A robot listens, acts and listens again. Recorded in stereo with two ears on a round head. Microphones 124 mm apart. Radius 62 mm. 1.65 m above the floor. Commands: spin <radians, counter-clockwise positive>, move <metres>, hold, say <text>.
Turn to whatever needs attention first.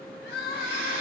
spin 1.57
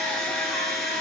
hold
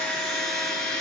hold
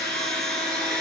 say Facing where the crying came from. I can't hear it now.